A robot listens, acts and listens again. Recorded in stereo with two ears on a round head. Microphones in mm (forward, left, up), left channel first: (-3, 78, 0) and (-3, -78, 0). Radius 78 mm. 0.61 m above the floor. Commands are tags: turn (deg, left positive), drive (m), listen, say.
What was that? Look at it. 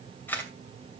<turn deg="30"/>
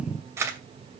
<turn deg="-15"/>
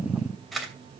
<say>Found it: a camera shutter, straight ahead, 2 to 4 m away.</say>